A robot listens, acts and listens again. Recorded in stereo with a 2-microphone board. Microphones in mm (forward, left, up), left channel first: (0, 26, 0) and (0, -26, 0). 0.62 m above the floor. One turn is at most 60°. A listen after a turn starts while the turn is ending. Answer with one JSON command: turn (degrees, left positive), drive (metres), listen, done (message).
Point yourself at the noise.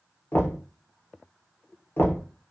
{"turn": 45}
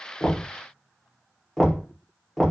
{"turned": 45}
{"done": "Found it: knocking, straight ahead, under 1 m away."}